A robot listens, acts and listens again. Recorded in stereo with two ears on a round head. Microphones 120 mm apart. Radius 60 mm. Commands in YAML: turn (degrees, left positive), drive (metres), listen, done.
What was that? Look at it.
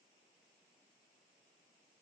listen: true
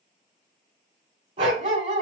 turn: -50
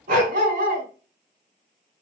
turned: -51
turn: -75
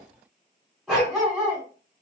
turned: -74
done: "Facing the dog barking, 2 to 4 m away."